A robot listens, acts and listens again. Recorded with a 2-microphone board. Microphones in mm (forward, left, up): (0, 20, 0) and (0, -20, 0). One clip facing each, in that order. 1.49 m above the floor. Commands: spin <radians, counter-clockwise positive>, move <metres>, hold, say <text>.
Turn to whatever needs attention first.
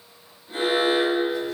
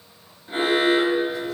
spin -0.87
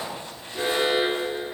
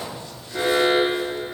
spin -1.48
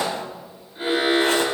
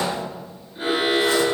say Found it: an alarm, straight ahead.